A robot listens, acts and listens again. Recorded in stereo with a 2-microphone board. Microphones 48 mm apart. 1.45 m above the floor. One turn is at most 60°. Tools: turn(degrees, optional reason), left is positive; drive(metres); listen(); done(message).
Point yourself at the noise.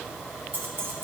turn(degrees=-50, reason="The keys jangling: about 50° right or 130° right.")
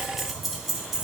turn(degrees=-10, reason="So it is at 10° right.")
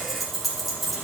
done("Facing the keys jangling.")